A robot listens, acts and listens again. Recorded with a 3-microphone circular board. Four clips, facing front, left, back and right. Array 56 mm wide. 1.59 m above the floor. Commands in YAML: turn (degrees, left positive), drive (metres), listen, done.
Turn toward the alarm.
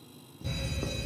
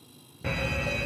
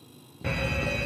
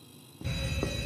turn: 135
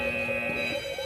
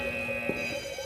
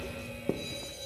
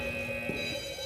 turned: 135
turn: 20
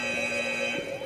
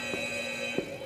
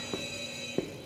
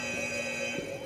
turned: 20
done: "Found it: an alarm, straight ahead."